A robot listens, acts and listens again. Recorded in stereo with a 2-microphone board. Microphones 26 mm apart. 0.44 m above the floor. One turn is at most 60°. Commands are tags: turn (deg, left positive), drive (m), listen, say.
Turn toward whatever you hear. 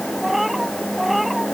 <turn deg="-30"/>
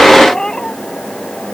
<turn deg="30"/>
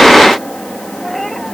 <say>Facing the cat meowing.</say>